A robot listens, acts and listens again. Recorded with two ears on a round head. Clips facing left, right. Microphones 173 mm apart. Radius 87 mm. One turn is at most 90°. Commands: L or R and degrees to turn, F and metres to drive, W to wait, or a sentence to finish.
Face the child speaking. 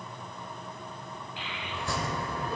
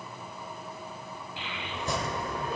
R75
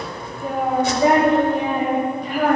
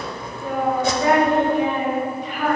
L45
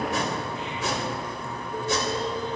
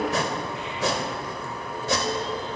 W
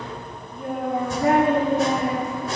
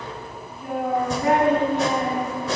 L35
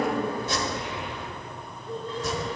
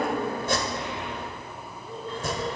L20
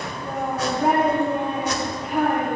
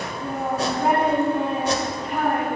Found it: a child speaking, straight ahead.